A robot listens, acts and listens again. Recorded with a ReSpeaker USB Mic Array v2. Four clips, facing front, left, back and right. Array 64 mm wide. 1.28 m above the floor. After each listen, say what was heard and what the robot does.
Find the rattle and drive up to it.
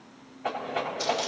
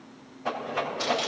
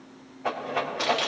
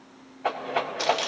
The rattle: 85° right. Turn 85° right.
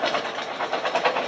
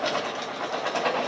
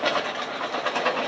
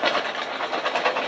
The rattle is now 20° right. Turn 20° right.
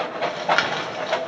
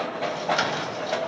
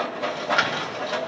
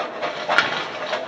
Drive 1.0 m forward.
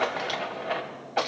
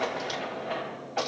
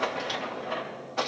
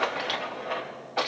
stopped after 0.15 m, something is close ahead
Something is in my way. I am facing the rattle but have not reached it.